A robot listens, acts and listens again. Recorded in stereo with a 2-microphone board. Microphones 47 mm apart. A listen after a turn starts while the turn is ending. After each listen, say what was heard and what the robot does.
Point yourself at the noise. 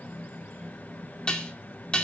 The dishes clattering: about 20° left or 160° left. Turn 20° left.
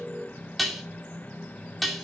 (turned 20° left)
Facing the dishes clattering, 2 to 4 m away.